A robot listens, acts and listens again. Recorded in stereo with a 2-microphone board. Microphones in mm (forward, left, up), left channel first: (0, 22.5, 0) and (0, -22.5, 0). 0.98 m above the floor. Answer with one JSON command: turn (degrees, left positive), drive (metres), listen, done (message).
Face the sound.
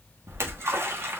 {"turn": -70}
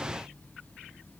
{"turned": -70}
{"listen": true}
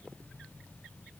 {"done": "I heard a splash, but can't make it out now. It was about straight ahead or 40° right."}